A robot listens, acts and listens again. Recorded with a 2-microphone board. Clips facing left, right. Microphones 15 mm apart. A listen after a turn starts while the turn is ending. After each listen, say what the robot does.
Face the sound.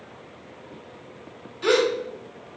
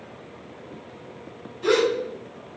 Turn 90° left.
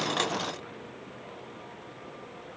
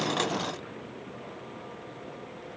Facing where the gasp came from. I can't hear it now.